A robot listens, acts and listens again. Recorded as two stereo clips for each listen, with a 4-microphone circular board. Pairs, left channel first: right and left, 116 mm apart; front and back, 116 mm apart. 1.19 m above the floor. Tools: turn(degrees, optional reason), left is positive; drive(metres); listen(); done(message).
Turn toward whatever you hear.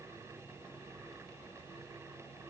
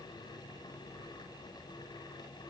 listen()
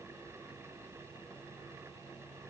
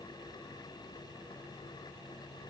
listen()
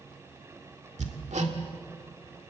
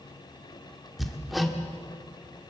turn(degrees=90, reason="The hammering: 90° left.")
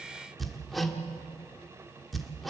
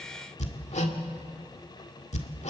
done("Found it: hammering, straight ahead.")